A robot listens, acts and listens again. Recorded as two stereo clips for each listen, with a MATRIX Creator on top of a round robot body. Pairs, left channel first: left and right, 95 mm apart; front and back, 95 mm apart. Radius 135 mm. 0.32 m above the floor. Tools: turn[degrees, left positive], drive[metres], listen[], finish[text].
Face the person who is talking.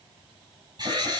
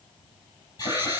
Action: listen[]
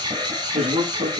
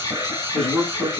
Thought: The man speaking: 85° right.
Action: turn[-85]
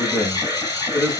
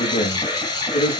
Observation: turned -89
Action: finish[Found it: a man speaking, straight ahead, over 4 m away.]